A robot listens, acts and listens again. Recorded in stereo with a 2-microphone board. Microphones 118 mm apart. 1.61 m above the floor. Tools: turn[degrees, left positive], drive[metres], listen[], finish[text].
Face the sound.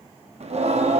Thought: The singing: about 65° right or 115° right.
Action: turn[-65]
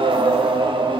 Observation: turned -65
Thought: So it is at 45° right.
Action: turn[-45]
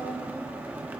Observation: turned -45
Thought: The singing is now 15° right.
Action: turn[-15]
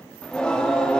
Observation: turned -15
Thought: The singing is now 10° left.
Action: turn[10]
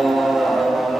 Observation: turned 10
Action: finish[Facing the singing, under 1 m away.]